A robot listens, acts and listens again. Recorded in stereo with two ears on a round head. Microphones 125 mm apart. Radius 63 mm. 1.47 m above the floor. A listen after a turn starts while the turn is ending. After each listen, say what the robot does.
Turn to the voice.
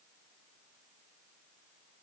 Keep listening.
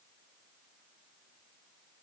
Keep listening.
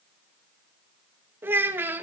Turn 15° right.
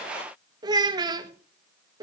Turn 150° right.
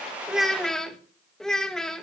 Facing the child speaking.